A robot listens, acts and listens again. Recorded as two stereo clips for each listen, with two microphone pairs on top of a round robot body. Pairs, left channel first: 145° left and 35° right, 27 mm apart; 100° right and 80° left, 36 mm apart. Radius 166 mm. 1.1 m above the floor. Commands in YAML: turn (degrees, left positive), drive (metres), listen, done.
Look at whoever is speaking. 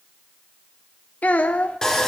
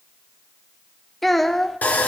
turn: 175
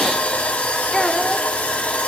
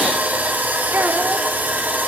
listen: true
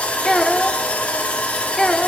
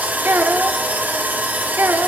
turn: 75
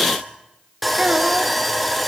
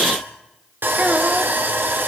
listen: true
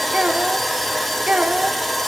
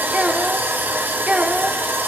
turn: 15
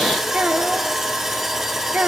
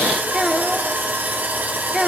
done: "Found it: a child speaking, straight ahead, 1 to 2 m away."